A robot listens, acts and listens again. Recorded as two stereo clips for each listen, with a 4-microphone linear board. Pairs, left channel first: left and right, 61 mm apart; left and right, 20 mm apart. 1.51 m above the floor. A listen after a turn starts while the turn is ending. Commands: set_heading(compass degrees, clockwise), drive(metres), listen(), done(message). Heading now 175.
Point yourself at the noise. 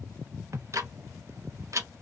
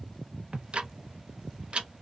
set_heading(230)
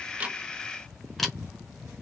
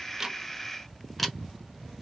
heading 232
done("Facing the ticking.")